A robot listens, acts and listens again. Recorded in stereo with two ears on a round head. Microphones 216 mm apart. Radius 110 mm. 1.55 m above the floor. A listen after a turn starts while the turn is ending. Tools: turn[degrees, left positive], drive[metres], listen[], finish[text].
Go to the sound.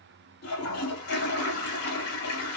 Thought: The toilet flushing: about 70° left or 110° left.
Action: turn[70]
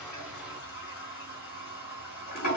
Thought: So it is at 35° left.
Action: turn[35]
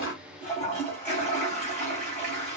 Thought: The toilet flushing is now 10° left.
Action: turn[10]
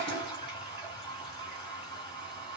Action: drive[1.0]
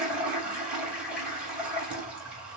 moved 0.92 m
Action: drive[1.0]
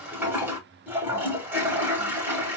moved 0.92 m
Thought: The toilet flushing is now 10° right.
Action: turn[-10]
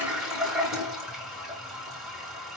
Action: drive[1.0]
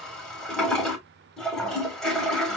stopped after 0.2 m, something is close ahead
Action: finish[I am next to the toilet flushing.]